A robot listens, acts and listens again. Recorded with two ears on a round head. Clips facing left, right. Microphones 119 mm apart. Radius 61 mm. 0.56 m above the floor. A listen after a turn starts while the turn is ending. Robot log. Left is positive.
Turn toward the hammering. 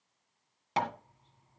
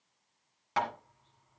note: The hammering: about 25° left or 155° left.
cmd yaw +25
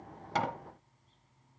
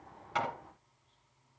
cmd idle
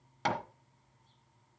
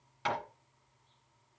note: So it is at 125° left.
cmd yaw +125
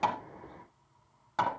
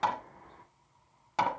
note: The hammering is now 15° right.
cmd yaw -15
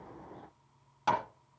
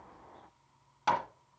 end: Found it: hammering, straight ahead.